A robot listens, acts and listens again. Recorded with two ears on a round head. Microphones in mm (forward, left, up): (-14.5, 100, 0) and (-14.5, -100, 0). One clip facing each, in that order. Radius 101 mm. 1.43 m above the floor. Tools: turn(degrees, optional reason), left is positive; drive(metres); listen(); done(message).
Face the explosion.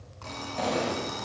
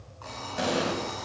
turn(degrees=-30)
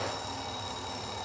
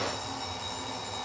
listen()
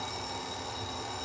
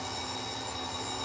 done("I heard an explosion, but can't make it out now. It was about 15° left or 135° right.")